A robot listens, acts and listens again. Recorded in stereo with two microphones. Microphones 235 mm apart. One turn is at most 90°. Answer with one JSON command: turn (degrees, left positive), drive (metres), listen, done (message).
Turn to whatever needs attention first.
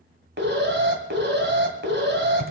{"turn": -50}
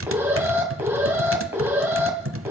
{"turn": -10}
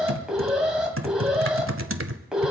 {"done": "Facing the alarm, 2 to 4 m away."}